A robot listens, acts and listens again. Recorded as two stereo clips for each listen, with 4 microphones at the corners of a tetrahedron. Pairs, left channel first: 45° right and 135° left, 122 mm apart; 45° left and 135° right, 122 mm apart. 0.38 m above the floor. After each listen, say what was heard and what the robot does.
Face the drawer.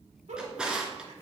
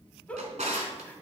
The drawer: 140° right. Turn 140° right.
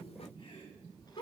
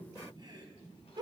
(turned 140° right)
Keep listening.
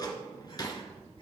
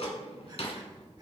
The drawer is now 10° left. Turn 10° left.
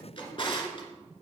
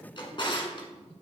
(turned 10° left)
Found it: a drawer, straight ahead.